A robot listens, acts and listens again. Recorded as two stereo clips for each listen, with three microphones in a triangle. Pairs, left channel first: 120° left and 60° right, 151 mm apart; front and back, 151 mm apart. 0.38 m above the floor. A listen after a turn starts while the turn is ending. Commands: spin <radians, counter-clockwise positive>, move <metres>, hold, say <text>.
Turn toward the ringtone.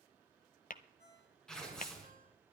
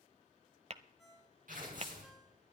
spin -1.57
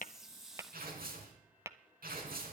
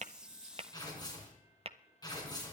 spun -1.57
hold
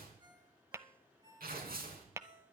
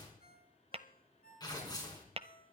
say Found it: a ringtone, straight ahead.